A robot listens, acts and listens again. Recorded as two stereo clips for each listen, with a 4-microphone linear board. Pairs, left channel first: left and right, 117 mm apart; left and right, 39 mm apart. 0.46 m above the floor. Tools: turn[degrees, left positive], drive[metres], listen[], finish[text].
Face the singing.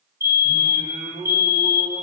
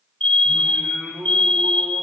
Thought: The singing: about 65° right or 115° right.
Action: turn[-65]
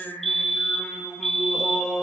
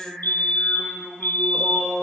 Action: finish[Found it: singing, straight ahead.]